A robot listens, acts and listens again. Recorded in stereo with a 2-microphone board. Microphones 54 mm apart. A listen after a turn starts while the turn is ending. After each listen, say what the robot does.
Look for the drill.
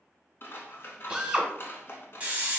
Turn 30° right.
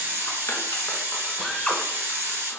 Turn 20° left.
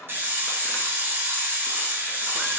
Keep listening.
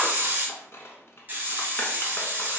Keep listening.
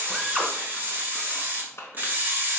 Found it: a drill, straight ahead, under 1 m away.